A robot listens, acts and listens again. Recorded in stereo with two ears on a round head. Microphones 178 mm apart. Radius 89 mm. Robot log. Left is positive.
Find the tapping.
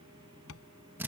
cmd yaw +90
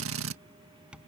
end: Facing the tapping.